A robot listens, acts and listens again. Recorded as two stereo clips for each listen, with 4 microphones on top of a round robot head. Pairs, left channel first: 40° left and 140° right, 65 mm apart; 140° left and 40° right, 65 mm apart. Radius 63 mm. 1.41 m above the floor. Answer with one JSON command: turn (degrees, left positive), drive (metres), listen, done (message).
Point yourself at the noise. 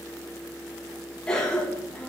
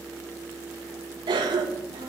{"turn": -40}
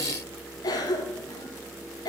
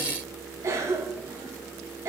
{"turn": 10}
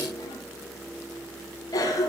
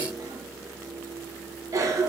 {"done": "Facing the cough, 1 to 2 m away."}